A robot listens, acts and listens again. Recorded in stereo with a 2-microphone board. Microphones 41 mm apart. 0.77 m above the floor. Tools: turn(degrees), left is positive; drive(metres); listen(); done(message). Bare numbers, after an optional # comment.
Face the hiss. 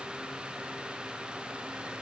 listen()
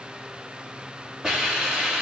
turn(-30)
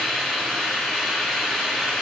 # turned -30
# So it is at 20° left.
turn(20)
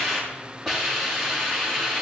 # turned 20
done("Found it: a hiss, straight ahead.")